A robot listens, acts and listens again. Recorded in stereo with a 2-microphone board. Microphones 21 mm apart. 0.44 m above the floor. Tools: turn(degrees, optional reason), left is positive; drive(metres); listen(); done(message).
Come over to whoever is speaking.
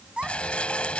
turn(degrees=-70, reason="The child speaking: about 70° right or 110° right.")
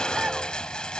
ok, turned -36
listen()
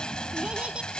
listen()
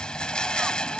done("I heard a child speaking, but can't make it out now. It was about 35° right or 75° right. I did not reach it.")